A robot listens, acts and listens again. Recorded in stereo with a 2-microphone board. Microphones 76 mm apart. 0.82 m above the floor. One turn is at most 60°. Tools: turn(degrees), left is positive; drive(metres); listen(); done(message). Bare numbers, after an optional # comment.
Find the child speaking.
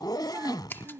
# The child speaking: about 30° right or 150° right.
turn(-30)
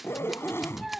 done("Facing the child speaking.")